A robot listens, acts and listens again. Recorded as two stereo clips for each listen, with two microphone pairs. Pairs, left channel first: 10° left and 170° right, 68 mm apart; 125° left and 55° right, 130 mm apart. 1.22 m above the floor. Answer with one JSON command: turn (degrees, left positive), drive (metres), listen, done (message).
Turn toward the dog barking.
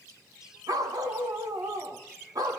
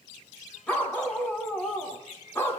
{"turn": -165}
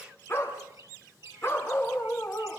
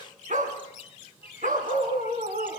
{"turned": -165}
{"turn": -50}
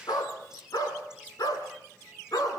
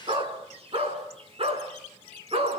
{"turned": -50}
{"turn": -15}
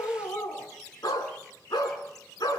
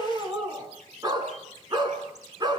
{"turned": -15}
{"done": "Facing the dog barking."}